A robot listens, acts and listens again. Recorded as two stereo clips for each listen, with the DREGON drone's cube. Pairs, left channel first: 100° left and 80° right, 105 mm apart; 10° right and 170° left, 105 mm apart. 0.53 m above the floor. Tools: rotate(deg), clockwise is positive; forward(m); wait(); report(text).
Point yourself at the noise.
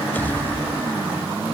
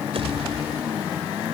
rotate(-170)
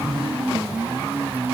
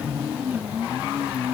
report("I heard a pop from this way, but can't make it out now.")